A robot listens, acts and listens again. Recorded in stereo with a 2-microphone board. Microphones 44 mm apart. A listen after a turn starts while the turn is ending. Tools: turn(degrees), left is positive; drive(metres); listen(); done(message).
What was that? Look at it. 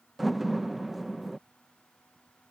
turn(degrees=30)
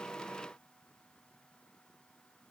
listen()
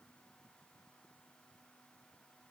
done("I heard a door slam, but can't make it out now. It was about 30° right or 150° left.")